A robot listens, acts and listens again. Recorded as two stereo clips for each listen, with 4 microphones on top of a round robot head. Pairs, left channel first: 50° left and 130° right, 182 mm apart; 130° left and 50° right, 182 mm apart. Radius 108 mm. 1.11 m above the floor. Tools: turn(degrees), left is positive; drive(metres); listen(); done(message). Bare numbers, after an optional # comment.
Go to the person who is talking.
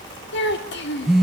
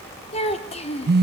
# The child speaking: 75° left.
turn(75)
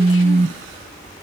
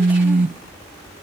listen()
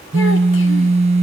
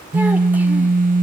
listen()
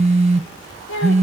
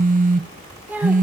# The child speaking is now 35° left.
turn(35)
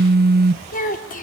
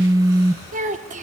drive(1.0)
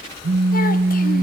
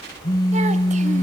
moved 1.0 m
listen()
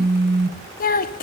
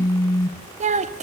drive(1.0)
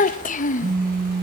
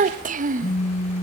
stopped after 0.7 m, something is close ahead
done("I am next to the child speaking.")